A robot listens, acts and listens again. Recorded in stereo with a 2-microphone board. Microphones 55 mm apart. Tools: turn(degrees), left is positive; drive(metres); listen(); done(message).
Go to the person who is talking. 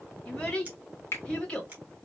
turn(degrees=20)
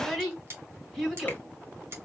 drive(metres=1.0)
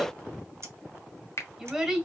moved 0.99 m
drive(metres=1.0)
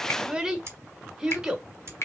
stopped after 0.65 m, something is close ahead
turn(degrees=-15)
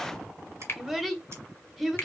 done("I am next to the child speaking.")